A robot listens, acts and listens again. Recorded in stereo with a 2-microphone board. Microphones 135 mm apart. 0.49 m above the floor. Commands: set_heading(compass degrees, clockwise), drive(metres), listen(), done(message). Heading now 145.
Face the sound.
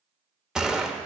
set_heading(175)
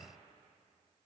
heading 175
listen()
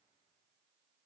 done("I heard a gunshot, but can't make it out now. It was about 25° left or 145° right.")